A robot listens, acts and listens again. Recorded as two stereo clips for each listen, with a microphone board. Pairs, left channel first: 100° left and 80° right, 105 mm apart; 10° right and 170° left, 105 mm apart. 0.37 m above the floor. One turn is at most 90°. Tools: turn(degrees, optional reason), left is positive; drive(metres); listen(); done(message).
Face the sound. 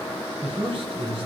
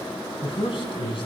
turn(degrees=-45, reason="The man speaking: 45° right.")
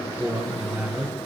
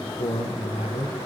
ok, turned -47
done("Found it: a man speaking, straight ahead, over 4 m away.")